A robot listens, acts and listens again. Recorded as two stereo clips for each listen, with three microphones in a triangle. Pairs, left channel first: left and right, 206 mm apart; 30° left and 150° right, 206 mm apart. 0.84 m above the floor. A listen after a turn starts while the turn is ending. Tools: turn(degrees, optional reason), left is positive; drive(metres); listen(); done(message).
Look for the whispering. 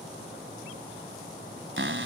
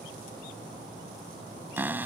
listen()
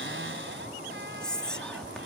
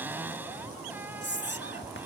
done("Found it: whispering, straight ahead.")